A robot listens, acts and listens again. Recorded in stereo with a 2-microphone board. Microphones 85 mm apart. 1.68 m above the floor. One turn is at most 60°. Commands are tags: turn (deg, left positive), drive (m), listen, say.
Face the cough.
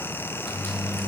<listen/>
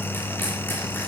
<listen/>
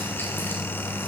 <say>I can't make out a cough, only a microwave.</say>